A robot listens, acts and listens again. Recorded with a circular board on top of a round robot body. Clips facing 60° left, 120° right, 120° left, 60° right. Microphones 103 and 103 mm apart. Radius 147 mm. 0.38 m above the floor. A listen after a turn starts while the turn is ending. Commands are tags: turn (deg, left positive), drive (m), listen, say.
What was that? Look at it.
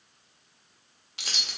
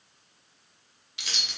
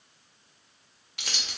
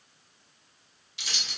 <turn deg="95"/>
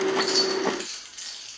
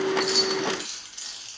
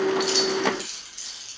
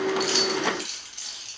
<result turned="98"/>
<turn deg="-70"/>
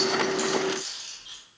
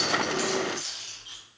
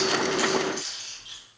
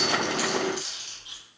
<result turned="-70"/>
<turn deg="-25"/>
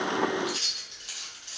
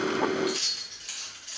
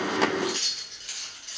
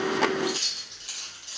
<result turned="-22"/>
<say>Found it: keys jangling, straight ahead, 2 to 4 m away.</say>